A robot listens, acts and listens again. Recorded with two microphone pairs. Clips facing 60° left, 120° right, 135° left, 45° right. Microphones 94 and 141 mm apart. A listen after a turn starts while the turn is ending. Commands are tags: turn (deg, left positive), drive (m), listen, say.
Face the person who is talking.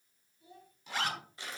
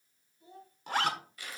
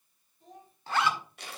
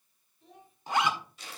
<turn deg="180"/>
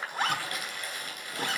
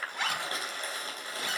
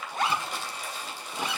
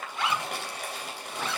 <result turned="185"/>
<listen/>
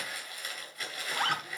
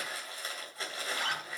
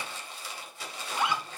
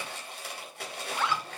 <listen/>
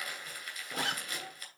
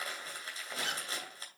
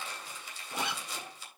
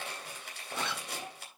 <say>Facing where the child speaking came from. I can't hear it now.</say>